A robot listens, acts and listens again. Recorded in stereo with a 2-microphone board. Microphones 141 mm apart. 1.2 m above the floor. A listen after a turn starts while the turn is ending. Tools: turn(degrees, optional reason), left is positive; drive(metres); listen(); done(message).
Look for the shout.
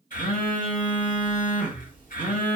listen()
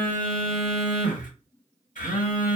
listen()
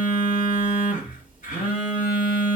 done("I can't make out a shout, only a phone buzzing.")